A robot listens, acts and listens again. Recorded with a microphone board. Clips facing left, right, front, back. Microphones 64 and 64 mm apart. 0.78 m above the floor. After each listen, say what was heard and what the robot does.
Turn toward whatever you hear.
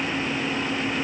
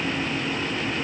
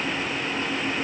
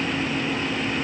Keep listening.
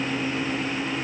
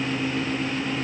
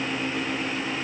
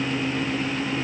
Keep listening.
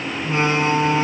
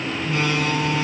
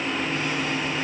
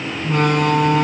The door slam: 150° left. Turn 150° left.
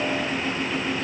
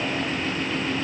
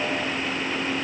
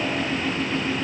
Facing where the door slam came from. I can't hear it now.